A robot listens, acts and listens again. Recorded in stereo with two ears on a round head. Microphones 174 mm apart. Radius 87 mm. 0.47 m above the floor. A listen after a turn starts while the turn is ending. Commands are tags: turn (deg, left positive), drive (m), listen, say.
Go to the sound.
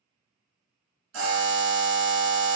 <turn deg="-70"/>
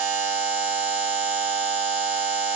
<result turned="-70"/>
<turn deg="-40"/>
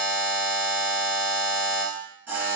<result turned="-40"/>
<turn deg="-10"/>
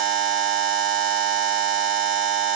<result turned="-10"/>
<drive m="1.0"/>
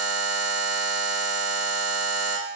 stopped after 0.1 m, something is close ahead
<say>Blocked. The buzzer is further on, straight ahead.</say>